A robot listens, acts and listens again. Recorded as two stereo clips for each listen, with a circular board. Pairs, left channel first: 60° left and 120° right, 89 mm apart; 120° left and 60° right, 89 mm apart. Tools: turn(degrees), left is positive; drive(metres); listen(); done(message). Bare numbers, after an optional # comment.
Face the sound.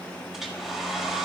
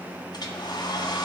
# The hair dryer: 155° left.
turn(155)
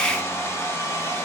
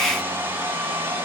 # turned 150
done("Found it: a hair dryer, straight ahead, 1 to 2 m away.")